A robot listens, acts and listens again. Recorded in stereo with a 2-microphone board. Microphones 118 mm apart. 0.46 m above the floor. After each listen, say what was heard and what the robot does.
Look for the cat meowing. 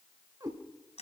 The cat meowing: about 30° right or 150° right. Turn 30° right.
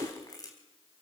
So it is at 120° right. Turn 120° right.
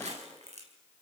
Keep listening.
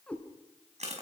The cat meowing is now 10° left. Turn 10° left.
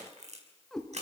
Facing the cat meowing, 2 to 4 m away.